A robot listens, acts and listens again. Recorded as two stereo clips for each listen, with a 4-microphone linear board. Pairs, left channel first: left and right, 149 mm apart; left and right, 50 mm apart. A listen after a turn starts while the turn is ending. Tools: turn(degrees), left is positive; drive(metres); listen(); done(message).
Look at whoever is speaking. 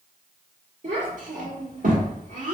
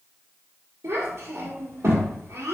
turn(degrees=-65)
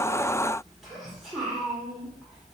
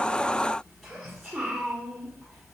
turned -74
done("Found it: a child speaking, straight ahead.")